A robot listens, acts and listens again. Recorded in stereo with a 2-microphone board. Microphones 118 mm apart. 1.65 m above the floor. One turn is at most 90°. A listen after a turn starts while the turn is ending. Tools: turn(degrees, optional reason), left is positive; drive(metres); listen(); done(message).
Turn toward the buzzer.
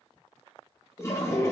listen()
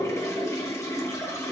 listen()
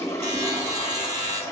turn(degrees=-70, reason="The buzzer: about 70° right or 110° right.")
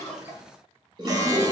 listen()
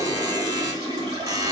turn(degrees=-30, reason="So it is at 30° right.")
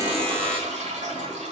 done("Facing the buzzer.")